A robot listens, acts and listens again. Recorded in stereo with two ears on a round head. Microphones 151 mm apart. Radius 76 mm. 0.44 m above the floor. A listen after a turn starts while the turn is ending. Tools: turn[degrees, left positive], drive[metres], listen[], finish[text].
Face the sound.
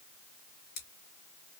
Thought: The scissors: about 60° left or 120° left.
Action: turn[60]
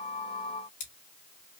Thought: So it is at 45° left.
Action: turn[45]
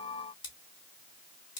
Thought: The scissors is now 30° left.
Action: turn[30]
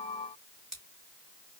Action: finish[Found it: scissors, straight ahead.]